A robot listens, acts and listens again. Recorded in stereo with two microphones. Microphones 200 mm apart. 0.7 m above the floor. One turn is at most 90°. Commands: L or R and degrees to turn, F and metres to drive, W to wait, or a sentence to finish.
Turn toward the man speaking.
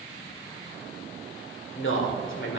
L70
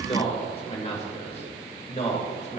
L35
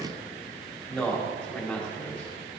Found it: a man speaking, straight ahead.